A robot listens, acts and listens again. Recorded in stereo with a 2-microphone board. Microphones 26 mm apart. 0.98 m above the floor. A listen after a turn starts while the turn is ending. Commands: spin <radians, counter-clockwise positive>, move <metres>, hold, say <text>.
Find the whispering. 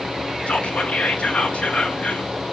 spin 0.87
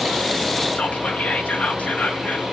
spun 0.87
spin 1.31
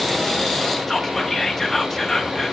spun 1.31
spin 0.17
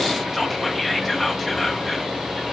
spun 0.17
say Found it: whispering, straight ahead, 1 to 2 m away.